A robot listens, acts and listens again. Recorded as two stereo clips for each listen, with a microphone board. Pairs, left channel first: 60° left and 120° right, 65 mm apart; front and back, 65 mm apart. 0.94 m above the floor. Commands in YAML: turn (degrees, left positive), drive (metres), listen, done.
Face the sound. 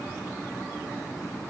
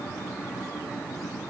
listen: true
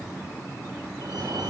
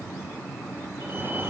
turn: -130
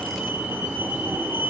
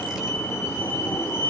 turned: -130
turn: -55
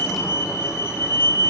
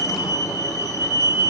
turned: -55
turn: 15
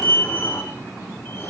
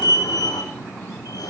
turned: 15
done: "Found it: a fire alarm, straight ahead."